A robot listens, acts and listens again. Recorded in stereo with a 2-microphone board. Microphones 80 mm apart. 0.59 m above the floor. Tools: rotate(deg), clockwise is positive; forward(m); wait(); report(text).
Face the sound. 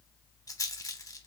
rotate(-50)
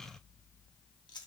rotate(-80)
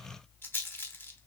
rotate(-30)
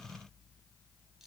report("Found it: a rattle, straight ahead, under 1 m away.")